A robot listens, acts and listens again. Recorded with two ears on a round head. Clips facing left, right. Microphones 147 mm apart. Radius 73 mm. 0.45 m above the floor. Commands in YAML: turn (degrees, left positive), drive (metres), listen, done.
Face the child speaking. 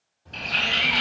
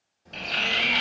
turn: -20
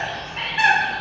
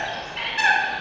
done: "Facing the child speaking, 1 to 2 m away."